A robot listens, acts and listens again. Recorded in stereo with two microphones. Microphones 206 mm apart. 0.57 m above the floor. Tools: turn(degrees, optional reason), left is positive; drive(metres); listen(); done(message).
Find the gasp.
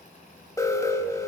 listen()
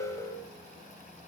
listen()
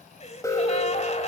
turn(degrees=35, reason="The gasp: about 35° left or 145° left.")
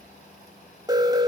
listen()
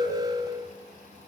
done("I heard a gasp, but can't make it out now. It was about straight ahead or 110° left.")